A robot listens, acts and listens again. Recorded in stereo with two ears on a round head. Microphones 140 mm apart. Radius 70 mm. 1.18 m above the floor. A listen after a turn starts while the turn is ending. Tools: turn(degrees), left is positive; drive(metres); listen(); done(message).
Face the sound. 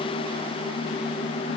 listen()
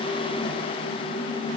listen()
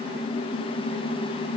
done("I can't make out anything to turn to.")